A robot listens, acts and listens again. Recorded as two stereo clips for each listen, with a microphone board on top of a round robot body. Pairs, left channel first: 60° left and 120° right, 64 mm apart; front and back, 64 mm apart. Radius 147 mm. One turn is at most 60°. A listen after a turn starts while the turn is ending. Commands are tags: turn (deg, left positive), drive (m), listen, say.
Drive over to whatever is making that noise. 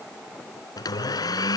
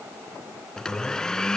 <turn deg="60"/>
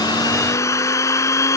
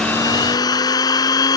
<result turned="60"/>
<turn deg="20"/>
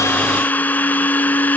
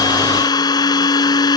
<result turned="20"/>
<drive m="1.0"/>
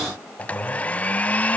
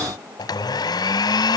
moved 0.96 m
<turn deg="-10"/>
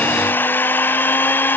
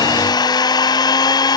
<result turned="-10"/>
<drive m="1.0"/>
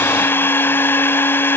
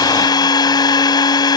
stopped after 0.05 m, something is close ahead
<say>Arrived at the blender, straight ahead.</say>